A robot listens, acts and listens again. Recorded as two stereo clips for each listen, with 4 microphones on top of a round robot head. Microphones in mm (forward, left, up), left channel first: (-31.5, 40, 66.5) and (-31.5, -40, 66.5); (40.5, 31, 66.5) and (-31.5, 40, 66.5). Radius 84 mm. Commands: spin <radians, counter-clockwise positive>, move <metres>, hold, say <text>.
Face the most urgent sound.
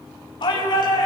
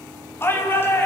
spin 0.87
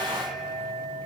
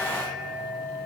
hold
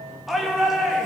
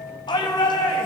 say Facing the shout.